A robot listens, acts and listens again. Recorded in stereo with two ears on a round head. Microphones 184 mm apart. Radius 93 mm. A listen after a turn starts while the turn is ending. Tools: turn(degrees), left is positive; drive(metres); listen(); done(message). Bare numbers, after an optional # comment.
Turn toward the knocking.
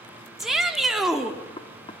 # The knocking: about 25° left or 155° left.
turn(25)
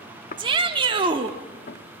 # So it is at 125° left.
turn(125)
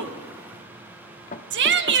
# The knocking is now 50° left.
turn(50)
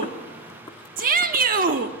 listen()
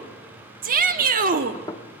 # The knocking is now 25° left.
turn(25)
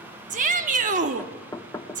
# The knocking is now 20° left.
turn(20)
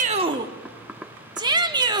done("Facing the knocking.")